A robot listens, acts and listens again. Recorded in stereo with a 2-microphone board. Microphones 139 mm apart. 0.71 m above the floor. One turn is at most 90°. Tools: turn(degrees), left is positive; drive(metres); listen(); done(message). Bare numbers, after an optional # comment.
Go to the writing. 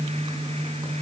listen()
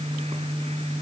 listen()
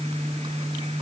done("I can't make out writing.")